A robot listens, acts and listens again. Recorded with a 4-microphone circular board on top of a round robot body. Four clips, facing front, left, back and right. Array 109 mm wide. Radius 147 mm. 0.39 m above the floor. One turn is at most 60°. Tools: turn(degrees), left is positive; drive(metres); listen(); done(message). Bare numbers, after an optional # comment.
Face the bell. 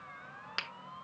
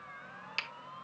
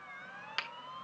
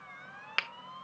listen()
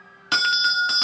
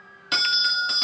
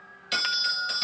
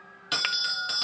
done("Found it: a bell, straight ahead.")